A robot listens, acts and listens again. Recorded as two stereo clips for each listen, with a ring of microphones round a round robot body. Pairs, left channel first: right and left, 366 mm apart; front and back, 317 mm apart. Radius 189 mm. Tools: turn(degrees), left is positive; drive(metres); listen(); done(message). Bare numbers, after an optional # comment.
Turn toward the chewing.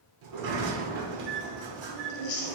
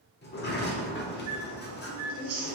# The chewing: 130° right.
turn(-130)
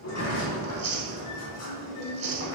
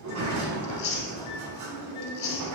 # The chewing is now 30° left.
turn(30)
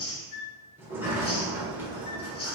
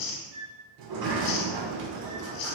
# The chewing is now 15° right.
turn(-15)
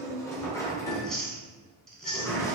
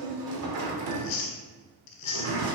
done("Found it: chewing, straight ahead.")